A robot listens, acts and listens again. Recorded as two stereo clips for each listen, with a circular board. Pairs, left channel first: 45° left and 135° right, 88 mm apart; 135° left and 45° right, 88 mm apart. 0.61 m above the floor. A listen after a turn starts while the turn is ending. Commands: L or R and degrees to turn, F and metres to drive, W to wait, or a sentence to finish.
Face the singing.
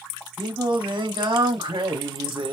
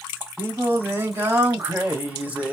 R120
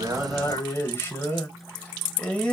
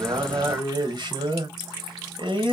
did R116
R35
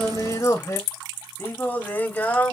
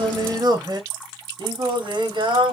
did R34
R25
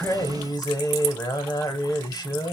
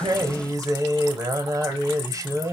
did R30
Found it: singing, straight ahead, 1 to 2 m away.